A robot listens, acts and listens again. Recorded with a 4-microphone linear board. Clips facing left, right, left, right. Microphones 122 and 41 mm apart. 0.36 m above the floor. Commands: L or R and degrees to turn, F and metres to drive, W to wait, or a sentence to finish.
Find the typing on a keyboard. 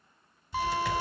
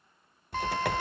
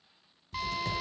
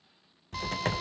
R60
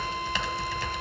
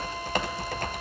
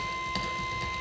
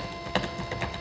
R50
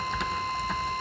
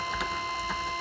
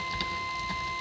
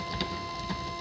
Facing the typing on a keyboard, 1 to 2 m away.